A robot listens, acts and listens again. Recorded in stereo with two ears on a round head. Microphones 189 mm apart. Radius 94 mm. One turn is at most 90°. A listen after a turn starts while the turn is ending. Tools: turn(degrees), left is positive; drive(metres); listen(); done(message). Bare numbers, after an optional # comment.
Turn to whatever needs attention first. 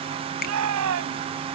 turn(-90)
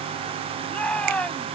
done("Found it: a shout, straight ahead.")